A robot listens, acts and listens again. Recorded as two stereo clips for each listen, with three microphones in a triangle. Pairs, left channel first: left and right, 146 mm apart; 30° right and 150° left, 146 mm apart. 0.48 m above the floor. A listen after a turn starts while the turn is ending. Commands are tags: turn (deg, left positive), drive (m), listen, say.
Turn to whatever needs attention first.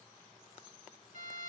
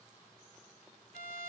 <listen/>
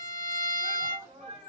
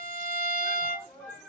<turn deg="-110"/>
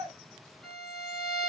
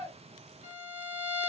<listen/>
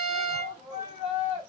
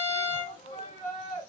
<turn deg="-50"/>
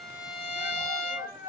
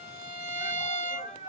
<say>Facing the shout, 1 to 2 m away.</say>